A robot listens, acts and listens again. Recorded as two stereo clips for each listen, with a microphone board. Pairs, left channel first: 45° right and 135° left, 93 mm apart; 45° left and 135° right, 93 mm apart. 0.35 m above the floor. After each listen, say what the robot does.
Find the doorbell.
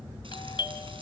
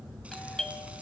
Turn 40° right.
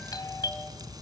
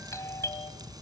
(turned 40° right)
Turn 10° right.
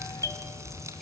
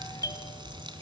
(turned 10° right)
Found it: a doorbell, straight ahead, 2 to 4 m away.